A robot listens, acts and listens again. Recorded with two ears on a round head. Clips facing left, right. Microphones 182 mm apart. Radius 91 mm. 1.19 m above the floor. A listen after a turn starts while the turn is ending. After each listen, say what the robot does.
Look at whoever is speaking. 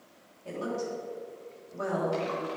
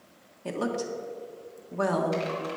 Turn 75° right.
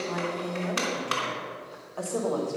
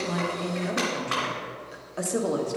Turn 20° right.
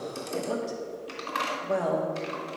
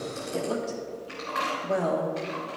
Found it: a woman speaking, straight ahead.